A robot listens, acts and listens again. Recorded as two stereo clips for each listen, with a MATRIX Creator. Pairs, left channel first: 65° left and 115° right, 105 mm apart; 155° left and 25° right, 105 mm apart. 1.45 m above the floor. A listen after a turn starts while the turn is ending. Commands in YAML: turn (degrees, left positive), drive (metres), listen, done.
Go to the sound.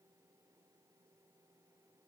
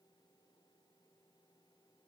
listen: true
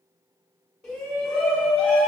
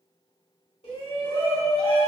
turn: 155
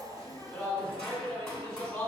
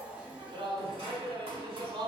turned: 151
drive: 1.0
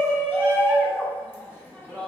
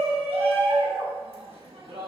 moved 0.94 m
drive: 1.0
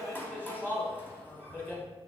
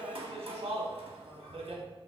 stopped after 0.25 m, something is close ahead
done: "Arrived at the shout, straight ahead."